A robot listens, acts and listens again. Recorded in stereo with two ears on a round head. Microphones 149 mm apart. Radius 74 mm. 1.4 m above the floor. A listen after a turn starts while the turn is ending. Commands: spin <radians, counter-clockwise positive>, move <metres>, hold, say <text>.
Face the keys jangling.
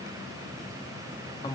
hold
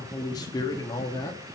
hold
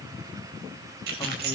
spin -1.13
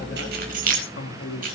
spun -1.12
spin -0.96
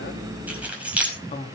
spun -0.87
spin -0.17
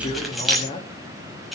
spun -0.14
say Facing the keys jangling.